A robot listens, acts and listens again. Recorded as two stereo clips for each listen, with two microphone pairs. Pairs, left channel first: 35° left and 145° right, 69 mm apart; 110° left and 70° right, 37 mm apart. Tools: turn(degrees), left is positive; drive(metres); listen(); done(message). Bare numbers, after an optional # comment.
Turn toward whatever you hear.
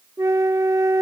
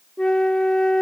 # The flute: straight behind.
turn(180)
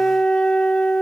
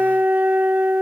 # The flute is now 40° right.
turn(-40)
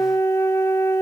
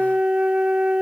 # The flute is now 10° right.
turn(-10)
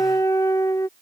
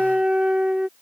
done("Found it: a flute, straight ahead.")